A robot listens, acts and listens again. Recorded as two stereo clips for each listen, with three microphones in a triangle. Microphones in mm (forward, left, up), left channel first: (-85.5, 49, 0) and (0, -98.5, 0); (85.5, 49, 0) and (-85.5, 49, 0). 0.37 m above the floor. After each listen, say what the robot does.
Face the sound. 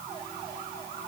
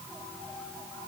Keep listening.
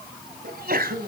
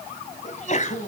Turn 40° right.
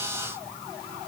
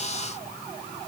Facing where the sneeze came from. I can't hear it now.